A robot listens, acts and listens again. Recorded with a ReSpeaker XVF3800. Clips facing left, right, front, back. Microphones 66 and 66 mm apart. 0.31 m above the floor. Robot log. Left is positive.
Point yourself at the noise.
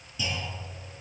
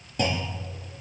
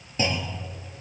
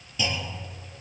note: The clunk: 55° right.
cmd yaw -55
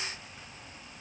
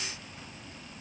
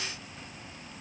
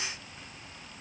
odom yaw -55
end: Facing where the clunk came from. I can't hear it now.